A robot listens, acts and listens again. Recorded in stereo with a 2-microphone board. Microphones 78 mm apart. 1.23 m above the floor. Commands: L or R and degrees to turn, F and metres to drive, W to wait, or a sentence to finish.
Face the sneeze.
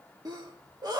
R55
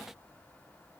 W
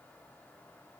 I heard a sneeze, but can't make it out now. It was about straight ahead or 70° right.